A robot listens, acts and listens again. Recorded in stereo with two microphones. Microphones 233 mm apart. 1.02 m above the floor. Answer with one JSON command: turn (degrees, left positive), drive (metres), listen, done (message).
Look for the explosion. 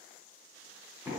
{"listen": true}
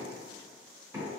{"listen": true}
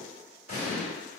{"turn": -70}
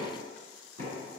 {"listen": true}
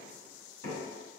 {"done": "I heard an explosion, but can't make it out now. It was about straight ahead or 40° right."}